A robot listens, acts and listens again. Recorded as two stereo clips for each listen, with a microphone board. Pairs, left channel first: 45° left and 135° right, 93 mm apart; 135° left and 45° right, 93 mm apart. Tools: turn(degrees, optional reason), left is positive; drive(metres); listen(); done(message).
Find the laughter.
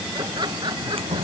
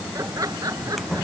turn(degrees=-95, reason="The laughter: 95° right.")
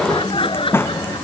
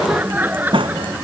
turn(degrees=25, reason="The laughter is now 25° left.")
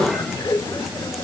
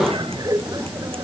done("Found it: laughter, straight ahead.")